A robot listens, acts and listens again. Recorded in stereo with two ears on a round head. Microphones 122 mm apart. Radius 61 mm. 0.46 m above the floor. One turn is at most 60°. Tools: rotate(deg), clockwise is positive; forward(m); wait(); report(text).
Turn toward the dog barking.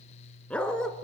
rotate(-30)
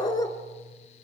rotate(-60)
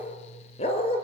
rotate(-60)
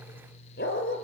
rotate(-60)
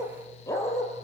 rotate(-20)
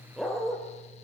report("Facing the dog barking.")